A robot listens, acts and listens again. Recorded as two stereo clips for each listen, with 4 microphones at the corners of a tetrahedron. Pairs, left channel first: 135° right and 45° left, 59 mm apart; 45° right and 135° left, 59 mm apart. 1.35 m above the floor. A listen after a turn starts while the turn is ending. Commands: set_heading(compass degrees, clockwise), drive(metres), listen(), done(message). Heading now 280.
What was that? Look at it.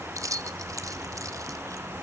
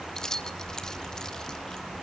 set_heading(245)
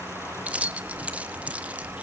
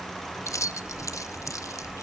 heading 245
set_heading(265)
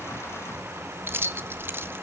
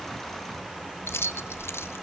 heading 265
done("Found it: keys jangling, straight ahead.")